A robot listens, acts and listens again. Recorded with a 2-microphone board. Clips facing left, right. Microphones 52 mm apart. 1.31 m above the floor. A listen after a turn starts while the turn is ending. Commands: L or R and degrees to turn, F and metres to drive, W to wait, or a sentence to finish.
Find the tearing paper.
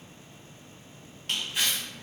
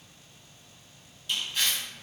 L30
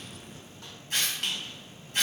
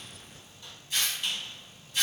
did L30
L140
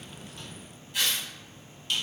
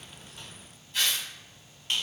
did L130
L10
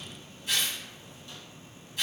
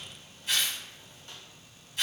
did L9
Found it: tearing paper, straight ahead, 1 to 2 m away.